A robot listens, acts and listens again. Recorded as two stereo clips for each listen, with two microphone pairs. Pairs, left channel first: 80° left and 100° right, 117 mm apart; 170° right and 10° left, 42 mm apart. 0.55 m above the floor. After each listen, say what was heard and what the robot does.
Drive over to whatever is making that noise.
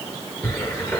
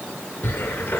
The cupboard door: 150° left. Turn 150° left.
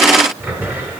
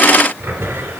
The cupboard door is now 25° right. Turn 25° right.
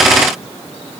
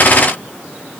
Keep listening.
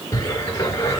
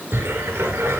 The cupboard door is now 15° left. Turn 15° left.
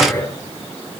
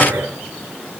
Drive 1.0 m forward.
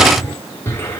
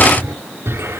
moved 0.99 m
The cupboard door is now 10° left. Turn 10° left.
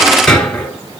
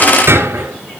Drive 1.0 m forward.
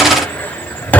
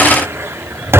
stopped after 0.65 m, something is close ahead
Arrived at the cupboard door, straight ahead.